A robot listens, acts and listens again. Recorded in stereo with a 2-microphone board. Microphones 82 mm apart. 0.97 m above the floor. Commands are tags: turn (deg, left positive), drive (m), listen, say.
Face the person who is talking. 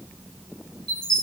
<listen/>
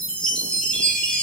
<listen/>
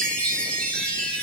<say>I can't make out anyone speaking, only a chime.</say>